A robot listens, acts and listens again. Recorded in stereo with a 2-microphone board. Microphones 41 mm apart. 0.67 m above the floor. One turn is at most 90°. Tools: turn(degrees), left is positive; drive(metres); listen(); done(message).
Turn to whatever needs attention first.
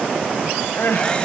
turn(degrees=90)
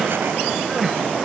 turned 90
turn(degrees=-10)
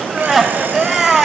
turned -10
done("Found it: crying, straight ahead, 1 to 2 m away.")